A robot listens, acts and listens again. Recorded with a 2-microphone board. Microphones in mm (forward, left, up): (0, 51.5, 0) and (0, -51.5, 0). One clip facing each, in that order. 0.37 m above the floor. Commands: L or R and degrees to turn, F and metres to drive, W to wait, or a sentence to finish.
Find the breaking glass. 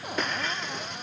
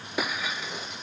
R30
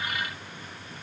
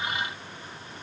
W
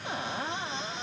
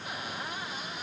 I heard breaking glass, but can't make it out now. It was about 25° left or 145° right.